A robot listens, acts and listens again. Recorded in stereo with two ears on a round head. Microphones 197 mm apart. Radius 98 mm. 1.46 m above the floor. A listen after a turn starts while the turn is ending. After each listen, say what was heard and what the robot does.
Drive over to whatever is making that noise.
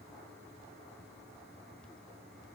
Keep listening.
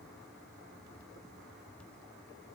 Keep listening.
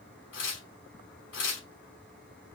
The tearing paper: about 60° left or 120° left. Turn 60° left.
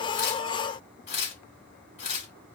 So it is at 45° left. Turn 45° left.
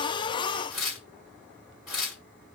Drive 1.0 m forward.
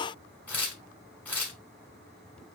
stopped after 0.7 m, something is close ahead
The tearing paper is now 10° left. Turn 10° left.
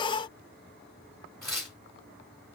I am next to the tearing paper.